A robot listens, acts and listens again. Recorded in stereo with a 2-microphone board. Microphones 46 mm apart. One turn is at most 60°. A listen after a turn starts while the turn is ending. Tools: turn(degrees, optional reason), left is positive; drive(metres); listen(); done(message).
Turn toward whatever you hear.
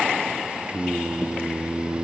turn(degrees=-30, reason="The singing: about 30° right or 150° right.")
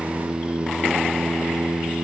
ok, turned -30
turn(degrees=-60, reason="So it is at 115° right.")
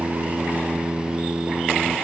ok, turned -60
turn(degrees=-55, reason="The singing is now 55° right.")
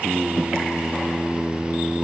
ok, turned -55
done("Found it: singing, straight ahead.")